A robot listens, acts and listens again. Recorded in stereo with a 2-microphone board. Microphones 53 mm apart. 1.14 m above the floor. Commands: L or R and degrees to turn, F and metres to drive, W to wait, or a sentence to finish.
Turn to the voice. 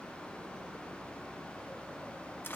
W
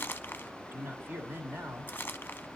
R40
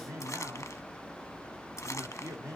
R100
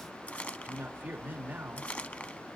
R35
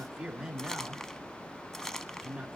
R15
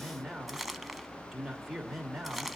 Facing the man speaking, 2 to 4 m away.